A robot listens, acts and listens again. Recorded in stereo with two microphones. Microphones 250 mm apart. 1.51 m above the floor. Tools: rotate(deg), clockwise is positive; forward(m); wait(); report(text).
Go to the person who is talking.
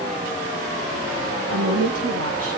rotate(65)
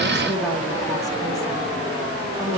forward(1.0)
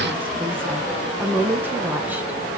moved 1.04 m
forward(1.0)
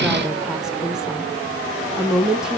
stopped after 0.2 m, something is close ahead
report("I am next to the woman speaking.")